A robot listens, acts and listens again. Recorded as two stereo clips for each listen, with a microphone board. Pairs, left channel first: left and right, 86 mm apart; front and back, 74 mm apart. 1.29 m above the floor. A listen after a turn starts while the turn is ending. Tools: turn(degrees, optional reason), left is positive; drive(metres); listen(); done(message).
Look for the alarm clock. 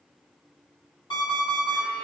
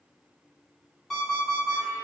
turn(degrees=80, reason="The alarm clock: 80° left.")
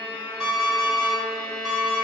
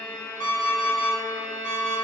done("Found it: an alarm clock, straight ahead, 1 to 2 m away.")